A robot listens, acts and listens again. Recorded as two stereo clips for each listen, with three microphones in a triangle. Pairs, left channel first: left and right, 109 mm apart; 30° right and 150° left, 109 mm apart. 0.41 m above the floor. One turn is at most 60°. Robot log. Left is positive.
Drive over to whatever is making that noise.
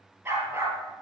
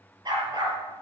note: The dog barking: 160° right.
cmd yaw -60
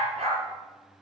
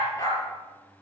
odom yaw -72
note: The dog barking is now 85° right.
cmd yaw -60
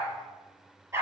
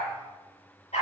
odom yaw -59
note: The dog barking is now 25° right.
cmd yaw -25
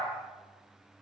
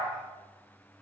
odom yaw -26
cmd idle
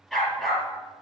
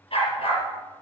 cmd fwd 1.0
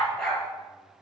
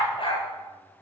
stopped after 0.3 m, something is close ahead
end: Something is in my way. I am facing the dog barking but have not reached it.